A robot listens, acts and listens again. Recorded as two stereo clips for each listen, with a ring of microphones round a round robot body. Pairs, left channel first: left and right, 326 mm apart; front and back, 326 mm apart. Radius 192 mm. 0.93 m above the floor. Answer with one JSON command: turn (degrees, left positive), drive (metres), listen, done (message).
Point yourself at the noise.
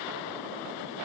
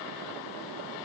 {"listen": true}
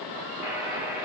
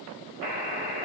{"done": "Found it: a buzzer, straight ahead."}